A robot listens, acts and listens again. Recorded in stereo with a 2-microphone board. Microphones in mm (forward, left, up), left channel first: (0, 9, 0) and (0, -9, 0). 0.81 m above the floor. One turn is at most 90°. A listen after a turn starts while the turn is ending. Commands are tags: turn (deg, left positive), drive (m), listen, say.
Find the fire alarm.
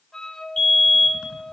<turn deg="40"/>
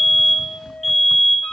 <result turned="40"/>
<say>Found it: a fire alarm, straight ahead.</say>